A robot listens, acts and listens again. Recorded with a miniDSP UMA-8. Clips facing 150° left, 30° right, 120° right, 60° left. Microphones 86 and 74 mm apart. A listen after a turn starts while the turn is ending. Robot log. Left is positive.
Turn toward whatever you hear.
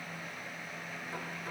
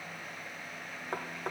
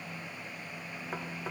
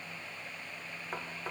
note: The knocking: 30° right.
cmd yaw -30
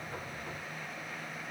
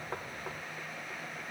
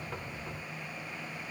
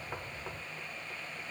cmd idle
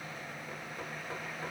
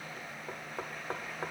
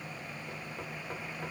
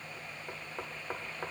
note: The knocking is now 10° left.
cmd yaw +10
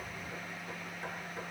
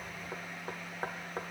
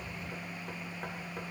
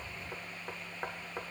end: Facing the knocking.